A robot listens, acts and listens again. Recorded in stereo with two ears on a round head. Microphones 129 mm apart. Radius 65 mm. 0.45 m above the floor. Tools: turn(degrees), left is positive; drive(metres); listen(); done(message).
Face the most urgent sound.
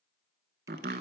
listen()
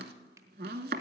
listen()
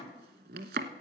done("I can't make out anything urgent to turn to.")